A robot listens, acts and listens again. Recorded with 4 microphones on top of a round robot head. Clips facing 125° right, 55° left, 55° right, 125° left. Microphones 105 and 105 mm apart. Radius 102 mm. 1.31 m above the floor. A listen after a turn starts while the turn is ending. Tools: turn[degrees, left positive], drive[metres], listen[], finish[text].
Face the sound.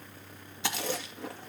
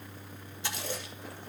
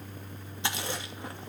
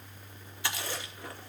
Thought: The chewing: 120° right.
Action: turn[-120]
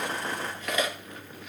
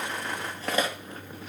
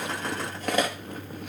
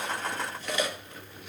Action: finish[Found it: chewing, straight ahead.]